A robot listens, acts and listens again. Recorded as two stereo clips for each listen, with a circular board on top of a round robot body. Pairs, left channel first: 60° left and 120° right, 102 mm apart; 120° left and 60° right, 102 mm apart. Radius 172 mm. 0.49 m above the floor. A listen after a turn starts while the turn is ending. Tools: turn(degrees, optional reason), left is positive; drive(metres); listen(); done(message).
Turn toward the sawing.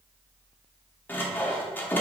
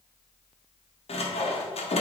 turn(degrees=130, reason="The sawing: 130° left.")
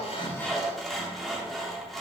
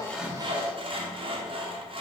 turn(degrees=-30, reason="The sawing is now 30° right.")
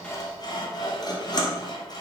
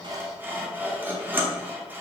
turn(degrees=10, reason="The sawing is now 10° left.")
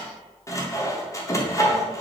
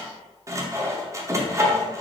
done("Facing the sawing.")